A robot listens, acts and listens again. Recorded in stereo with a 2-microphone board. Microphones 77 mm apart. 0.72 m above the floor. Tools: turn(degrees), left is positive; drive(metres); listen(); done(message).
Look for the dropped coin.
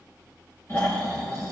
listen()
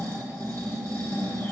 listen()
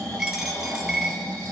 turn(degrees=-30)
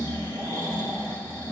listen()
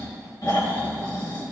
done("I heard a dropped coin, but can't make it out now. It was about 25° left or 145° right.")